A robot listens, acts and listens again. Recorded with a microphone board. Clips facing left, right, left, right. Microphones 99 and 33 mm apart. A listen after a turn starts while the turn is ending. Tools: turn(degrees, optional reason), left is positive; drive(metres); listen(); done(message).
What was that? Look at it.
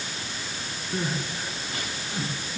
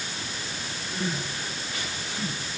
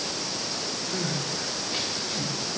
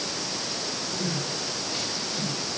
turn(degrees=40, reason="The crying: about 40° left or 140° left.")
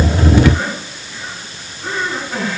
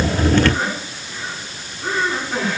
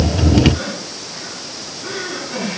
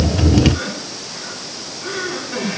done("Found it: crying, straight ahead.")